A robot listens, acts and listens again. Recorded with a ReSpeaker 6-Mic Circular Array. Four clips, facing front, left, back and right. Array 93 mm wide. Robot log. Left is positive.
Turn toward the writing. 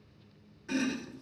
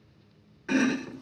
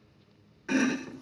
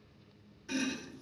cmd idle
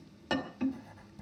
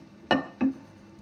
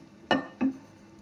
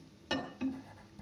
note: The writing: 30° right.
cmd yaw -30
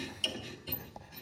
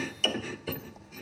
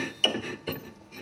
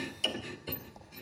end: Found it: writing, straight ahead.